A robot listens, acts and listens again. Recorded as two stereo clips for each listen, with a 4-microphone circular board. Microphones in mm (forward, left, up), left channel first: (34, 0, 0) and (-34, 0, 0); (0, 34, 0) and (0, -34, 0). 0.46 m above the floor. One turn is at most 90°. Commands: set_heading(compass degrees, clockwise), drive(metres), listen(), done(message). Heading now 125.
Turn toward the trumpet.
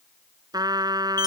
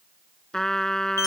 set_heading(35)
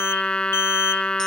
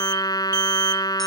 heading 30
set_heading(315)
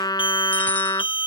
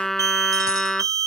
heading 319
done("Facing the trumpet.")